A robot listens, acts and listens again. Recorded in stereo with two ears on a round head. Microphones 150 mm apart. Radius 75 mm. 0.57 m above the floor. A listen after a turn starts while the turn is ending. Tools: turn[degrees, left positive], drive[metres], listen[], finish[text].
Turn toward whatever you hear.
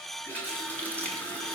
Action: turn[30]
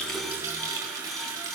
Thought: So it is at 20° right.
Action: turn[-20]
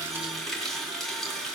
Action: finish[Facing the running tap, 2 to 4 m away.]